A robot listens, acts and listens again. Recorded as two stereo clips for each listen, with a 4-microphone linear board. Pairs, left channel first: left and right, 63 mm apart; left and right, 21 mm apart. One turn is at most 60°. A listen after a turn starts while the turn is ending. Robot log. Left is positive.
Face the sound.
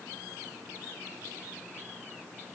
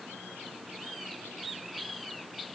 cmd idle
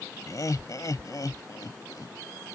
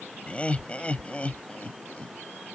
note: The laughter: about 75° left or 105° left.
cmd yaw +60
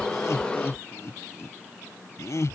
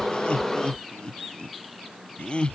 note: So it is at 50° left.
cmd yaw +50
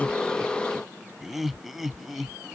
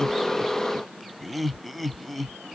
end: Facing the laughter.